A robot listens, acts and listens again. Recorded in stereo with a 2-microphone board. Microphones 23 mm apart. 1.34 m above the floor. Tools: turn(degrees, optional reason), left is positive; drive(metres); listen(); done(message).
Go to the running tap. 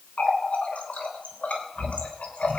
turn(degrees=90)
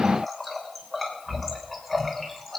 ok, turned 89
turn(degrees=10, reason="So it is at 10° left.")
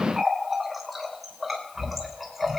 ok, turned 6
drive(metres=1.0)
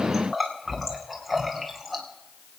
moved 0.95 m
drive(metres=1.0)
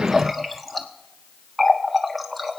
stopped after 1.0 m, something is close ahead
done("I am next to the running tap.")